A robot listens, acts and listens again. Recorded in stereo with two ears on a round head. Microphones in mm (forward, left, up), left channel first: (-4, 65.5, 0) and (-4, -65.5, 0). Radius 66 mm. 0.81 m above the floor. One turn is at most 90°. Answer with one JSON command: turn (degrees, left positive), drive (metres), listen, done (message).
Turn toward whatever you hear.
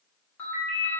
{"turn": 15}
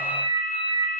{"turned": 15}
{"turn": 90}
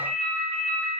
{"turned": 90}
{"turn": 55}
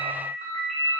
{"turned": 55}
{"turn": -15}
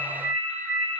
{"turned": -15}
{"done": "Facing the ringtone, 1 to 2 m away."}